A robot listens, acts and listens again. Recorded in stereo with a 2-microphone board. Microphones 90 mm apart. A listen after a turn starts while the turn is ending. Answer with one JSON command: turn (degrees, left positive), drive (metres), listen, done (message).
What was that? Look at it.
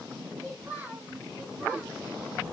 {"turn": -15}
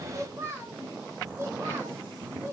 {"turn": -30}
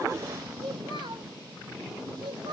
{"turn": -120}
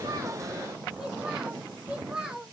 {"turn": -10}
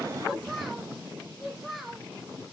{"done": "Facing the child speaking."}